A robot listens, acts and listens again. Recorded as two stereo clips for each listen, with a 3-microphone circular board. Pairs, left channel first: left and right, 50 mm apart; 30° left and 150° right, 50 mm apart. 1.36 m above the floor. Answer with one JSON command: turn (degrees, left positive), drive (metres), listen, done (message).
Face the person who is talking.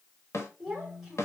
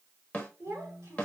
{"turn": -165}
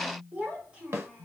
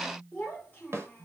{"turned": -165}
{"turn": -20}
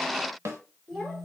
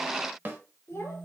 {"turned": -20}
{"done": "Found it: a child speaking, straight ahead, 2 to 4 m away."}